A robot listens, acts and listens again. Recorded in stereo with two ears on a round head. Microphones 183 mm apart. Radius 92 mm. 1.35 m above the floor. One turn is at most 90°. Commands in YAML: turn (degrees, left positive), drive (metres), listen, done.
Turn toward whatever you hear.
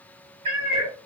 turn: -25
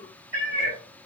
turn: -35
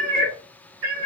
turn: -90
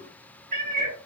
turn: -35
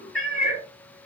done: "Facing the cat meowing, 2 to 4 m away."